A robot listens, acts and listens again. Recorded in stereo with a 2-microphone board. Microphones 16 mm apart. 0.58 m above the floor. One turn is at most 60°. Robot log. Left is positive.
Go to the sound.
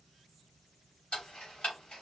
note: The ticking: about 75° left or 105° left.
cmd yaw +60
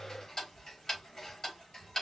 note: So it is at 35° left.
cmd yaw +35
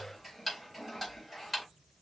cmd fwd 1.0
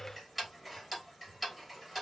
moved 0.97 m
cmd fwd 1.0
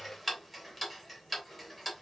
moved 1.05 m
note: The ticking is now 10° left.
cmd yaw +10
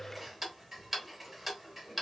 cmd fwd 1.0
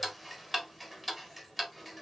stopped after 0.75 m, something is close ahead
end: I am next to the ticking.